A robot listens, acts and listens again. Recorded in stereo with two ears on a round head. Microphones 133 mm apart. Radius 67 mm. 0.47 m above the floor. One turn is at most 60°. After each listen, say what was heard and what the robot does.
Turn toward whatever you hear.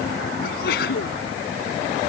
The sneeze: about 65° left or 115° left. Turn 60° left.
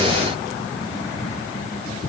Keep listening.
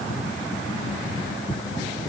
I heard a sneeze, but can't make it out now. It was about 5° left or 55° left.